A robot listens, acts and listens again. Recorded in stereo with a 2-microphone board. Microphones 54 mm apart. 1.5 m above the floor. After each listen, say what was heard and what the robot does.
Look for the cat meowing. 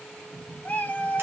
The cat meowing: about 30° left or 150° left. Turn 30° left.
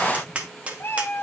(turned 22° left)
So it is at 120° left. Turn 120° left.
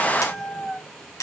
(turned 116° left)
Found it: a cat meowing, straight ahead, 1 to 2 m away.